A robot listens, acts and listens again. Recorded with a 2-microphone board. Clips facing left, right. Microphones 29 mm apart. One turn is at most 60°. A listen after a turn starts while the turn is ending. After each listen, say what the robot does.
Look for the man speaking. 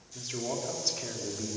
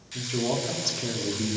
Turn 15° right.
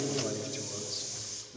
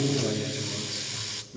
Turn 30° right.
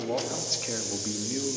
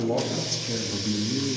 Turn 15° left.
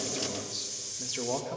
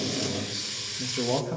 Turn 10° right.
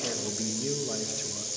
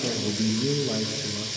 Turn 10° right.
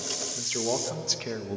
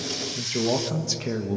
Facing the man speaking, 1 to 2 m away.